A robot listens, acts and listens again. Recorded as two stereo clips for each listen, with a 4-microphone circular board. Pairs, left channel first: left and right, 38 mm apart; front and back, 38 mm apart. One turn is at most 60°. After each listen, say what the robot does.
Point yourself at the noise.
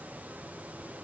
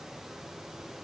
Keep listening.
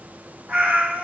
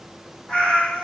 Turn 55° right.
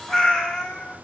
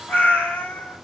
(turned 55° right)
Turn 25° left.
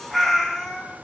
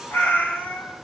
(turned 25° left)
Turn 10° left.
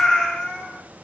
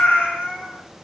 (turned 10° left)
Turn 25° left.
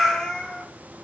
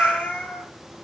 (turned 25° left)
Turn 10° left.
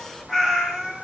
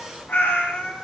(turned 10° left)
Found it: a cat meowing, straight ahead.